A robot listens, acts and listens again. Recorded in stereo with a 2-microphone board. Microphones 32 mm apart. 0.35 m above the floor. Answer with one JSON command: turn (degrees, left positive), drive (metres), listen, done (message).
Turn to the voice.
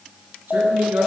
{"turn": -75}
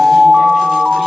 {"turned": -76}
{"listen": true}
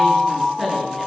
{"done": "Facing the woman speaking."}